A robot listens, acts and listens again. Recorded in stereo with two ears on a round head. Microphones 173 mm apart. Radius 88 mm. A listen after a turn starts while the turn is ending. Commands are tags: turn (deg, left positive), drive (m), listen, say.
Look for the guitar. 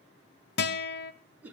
<turn deg="55"/>
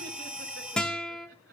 <say>Facing the guitar.</say>